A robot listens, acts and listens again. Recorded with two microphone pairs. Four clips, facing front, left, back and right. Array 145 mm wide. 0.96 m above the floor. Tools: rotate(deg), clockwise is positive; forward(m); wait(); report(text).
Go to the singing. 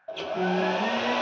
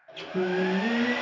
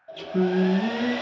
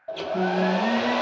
rotate(-175)
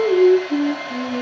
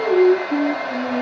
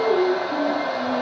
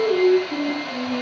rotate(-35)
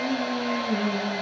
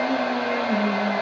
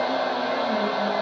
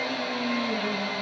wait()
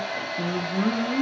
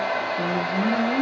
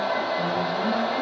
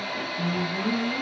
rotate(-30)
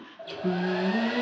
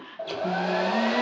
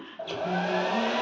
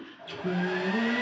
wait()
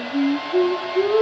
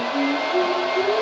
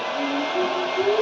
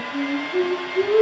forward(1.0)
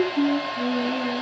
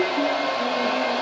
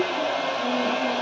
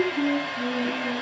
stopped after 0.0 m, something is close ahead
report("Something is in my way. I am facing the singing but have not reached it.")